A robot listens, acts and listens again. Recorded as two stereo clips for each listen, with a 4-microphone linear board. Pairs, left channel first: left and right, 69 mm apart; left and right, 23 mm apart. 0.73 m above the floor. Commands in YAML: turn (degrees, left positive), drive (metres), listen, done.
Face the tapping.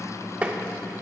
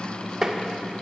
turn: -20
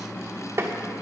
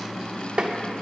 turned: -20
turn: -140
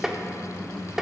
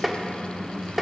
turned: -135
done: "Found it: tapping, straight ahead."